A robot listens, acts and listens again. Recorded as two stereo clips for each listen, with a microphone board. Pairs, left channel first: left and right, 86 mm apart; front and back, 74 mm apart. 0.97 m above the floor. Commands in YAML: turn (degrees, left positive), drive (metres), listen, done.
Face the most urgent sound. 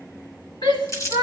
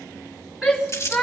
turn: 100
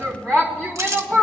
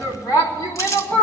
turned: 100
turn: 15
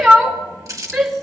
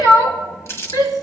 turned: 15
done: "Found it: a shout, straight ahead, 2 to 4 m away."